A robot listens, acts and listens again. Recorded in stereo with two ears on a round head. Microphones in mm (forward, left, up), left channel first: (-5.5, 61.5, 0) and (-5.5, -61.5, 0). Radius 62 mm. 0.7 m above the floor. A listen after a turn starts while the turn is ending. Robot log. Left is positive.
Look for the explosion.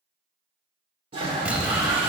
cmd yaw -30
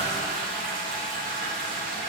cmd idle
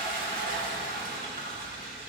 end: I heard an explosion, but can't make it out now. It was about 20° left or 140° right.